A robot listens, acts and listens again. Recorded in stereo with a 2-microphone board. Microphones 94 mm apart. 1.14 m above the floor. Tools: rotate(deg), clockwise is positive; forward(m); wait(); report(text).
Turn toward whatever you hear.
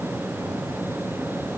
wait()
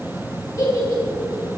rotate(-35)
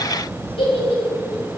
rotate(-110)
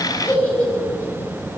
rotate(-20)
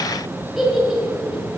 report("Facing the giggle, over 4 m away.")